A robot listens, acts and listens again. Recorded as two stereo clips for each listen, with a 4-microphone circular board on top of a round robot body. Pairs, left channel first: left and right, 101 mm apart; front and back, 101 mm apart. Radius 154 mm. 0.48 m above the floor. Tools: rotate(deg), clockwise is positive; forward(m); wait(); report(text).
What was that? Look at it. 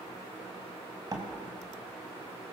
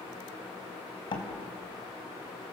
rotate(40)
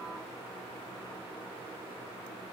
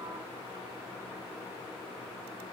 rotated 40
report("Facing where the door slam came from. I can't hear it now.")